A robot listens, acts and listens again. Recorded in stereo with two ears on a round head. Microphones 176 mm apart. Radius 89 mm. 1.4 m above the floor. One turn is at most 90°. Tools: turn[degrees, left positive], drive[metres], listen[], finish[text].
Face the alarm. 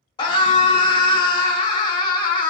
Action: listen[]
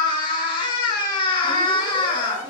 Action: turn[-30]
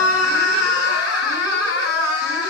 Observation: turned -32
Action: listen[]
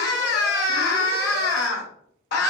Action: listen[]
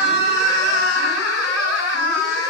Action: finish[I heard an alarm, but can't make it out now. It was about 20° left or 135° right.]